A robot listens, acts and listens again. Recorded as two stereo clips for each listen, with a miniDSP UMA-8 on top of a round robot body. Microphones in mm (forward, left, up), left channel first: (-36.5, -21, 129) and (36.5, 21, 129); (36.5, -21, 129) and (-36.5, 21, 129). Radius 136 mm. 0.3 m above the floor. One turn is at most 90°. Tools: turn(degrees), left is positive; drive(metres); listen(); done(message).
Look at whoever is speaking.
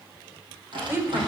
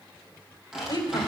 turn(degrees=-30)
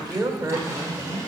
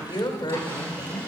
done("Facing the woman speaking.")